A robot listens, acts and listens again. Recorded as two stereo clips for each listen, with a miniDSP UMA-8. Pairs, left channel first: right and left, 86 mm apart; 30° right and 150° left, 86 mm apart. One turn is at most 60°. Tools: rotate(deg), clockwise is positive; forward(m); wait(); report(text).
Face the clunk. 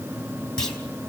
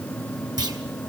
rotate(60)
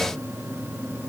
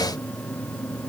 rotate(60)
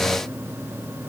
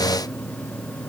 rotate(55)
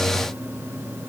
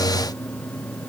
report("Facing where the clunk came from. I can't hear it now.")